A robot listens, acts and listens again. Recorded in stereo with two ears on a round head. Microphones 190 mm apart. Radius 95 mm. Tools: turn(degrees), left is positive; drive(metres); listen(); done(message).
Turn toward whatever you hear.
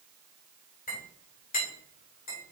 turn(degrees=40)
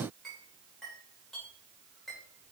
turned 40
done("Facing the clink, 2 to 4 m away.")